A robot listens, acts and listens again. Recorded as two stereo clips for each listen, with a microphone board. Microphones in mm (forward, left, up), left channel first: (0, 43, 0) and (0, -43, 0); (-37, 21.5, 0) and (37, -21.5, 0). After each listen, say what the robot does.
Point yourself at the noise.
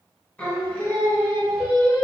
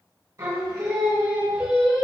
Turn 50° left.
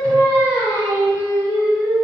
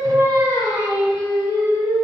Turn 50° left.
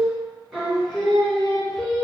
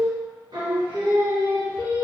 Turn 10° left.
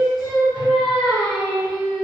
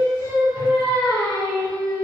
Found it: singing, straight ahead.